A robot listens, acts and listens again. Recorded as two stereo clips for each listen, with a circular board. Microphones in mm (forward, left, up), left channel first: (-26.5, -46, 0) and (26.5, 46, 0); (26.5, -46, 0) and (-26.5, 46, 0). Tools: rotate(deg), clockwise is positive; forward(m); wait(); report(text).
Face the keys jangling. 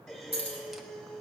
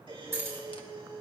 rotate(-55)
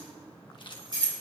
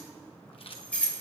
rotate(-20)
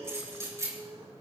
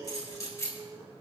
report("Found it: keys jangling, straight ahead, 2 to 4 m away.")